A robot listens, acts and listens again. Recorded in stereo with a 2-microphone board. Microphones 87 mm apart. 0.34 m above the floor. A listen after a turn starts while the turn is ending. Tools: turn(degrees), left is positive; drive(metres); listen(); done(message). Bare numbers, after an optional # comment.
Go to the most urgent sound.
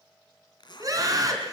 # The scream: about 40° right or 140° right.
turn(-40)
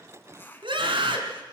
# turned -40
# So it is at 95° right.
turn(-95)
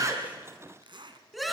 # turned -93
drive(1.0)
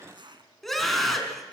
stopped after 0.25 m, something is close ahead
done("Something is in my way. I am facing the scream but have not reached it.")